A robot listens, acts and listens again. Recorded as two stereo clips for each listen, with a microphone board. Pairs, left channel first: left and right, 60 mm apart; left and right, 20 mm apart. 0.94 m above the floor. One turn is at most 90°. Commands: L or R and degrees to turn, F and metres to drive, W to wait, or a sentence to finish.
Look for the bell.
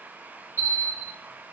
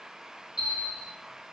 R40
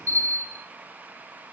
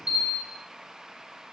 R90
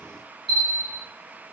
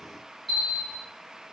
Facing the bell.